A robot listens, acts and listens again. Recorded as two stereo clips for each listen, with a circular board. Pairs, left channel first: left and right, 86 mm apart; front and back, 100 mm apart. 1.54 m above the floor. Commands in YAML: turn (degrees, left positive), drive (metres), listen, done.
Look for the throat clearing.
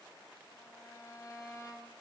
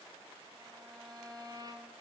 listen: true
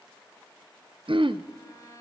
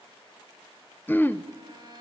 turn: -70
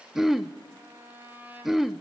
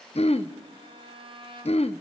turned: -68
done: "Found it: throat clearing, straight ahead, under 1 m away."